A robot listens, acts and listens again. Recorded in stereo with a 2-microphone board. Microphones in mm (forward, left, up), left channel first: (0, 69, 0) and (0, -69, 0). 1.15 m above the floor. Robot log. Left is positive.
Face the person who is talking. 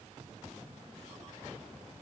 cmd idle
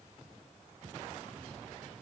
cmd idle
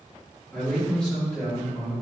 cmd yaw +30
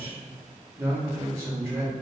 note: So it is at 20° right.
cmd yaw -20
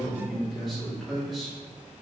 end: Found it: a man speaking, straight ahead.